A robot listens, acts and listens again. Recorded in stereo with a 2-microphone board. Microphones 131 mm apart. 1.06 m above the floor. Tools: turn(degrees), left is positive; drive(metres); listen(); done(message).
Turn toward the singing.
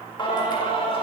turn(degrees=40)
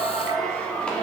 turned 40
turn(degrees=10)
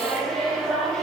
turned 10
done("Facing the singing.")